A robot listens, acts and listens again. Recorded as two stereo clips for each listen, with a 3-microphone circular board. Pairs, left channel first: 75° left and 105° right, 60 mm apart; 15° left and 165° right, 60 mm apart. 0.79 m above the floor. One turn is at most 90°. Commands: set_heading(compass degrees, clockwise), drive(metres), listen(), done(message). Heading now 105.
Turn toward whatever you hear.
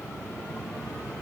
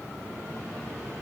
listen()
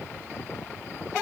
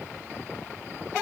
listen()
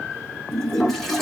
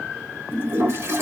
set_heading(15)
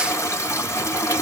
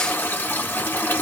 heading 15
set_heading(315)
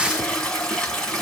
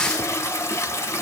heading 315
done("Facing the toilet flushing, 1 to 2 m away.")